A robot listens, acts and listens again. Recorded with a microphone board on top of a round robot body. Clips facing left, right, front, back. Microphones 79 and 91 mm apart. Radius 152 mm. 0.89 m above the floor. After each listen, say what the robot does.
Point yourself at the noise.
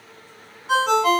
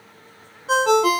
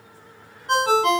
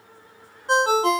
Turn 120° right.
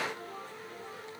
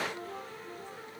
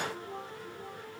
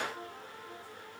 Keep listening.
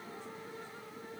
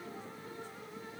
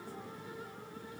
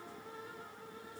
Turn 15° right.
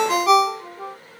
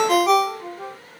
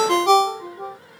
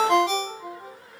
Found it: a ringtone, straight ahead, under 1 m away.